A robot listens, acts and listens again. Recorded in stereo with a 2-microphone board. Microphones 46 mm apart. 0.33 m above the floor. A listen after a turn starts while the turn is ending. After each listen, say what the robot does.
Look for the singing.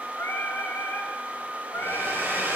Turn 55° left.
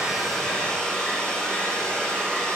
Keep listening.
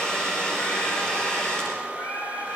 Turn 80° left.
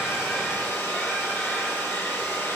Keep listening.
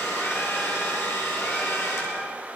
Keep listening.
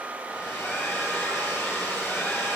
I heard singing from this way, but can't make it out now.